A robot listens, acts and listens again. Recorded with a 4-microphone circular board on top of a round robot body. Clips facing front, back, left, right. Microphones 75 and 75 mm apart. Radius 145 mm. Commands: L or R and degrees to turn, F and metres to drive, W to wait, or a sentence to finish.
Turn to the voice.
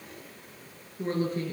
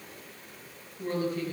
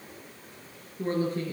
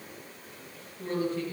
L50
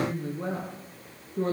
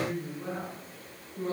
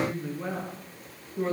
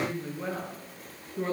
Facing the woman speaking.